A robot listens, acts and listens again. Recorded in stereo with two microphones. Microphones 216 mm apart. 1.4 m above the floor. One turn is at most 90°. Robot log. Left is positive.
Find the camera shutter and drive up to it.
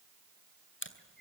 note: The camera shutter: about 65° left or 115° left.
cmd yaw +65
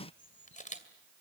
note: So it is at 40° left.
cmd yaw +40
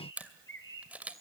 cmd fwd 1.0
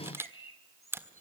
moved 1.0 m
note: The camera shutter is now 15° right.
cmd yaw -15
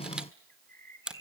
cmd fwd 1.0
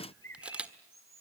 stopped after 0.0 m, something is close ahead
end: Arrived at the camera shutter, straight ahead.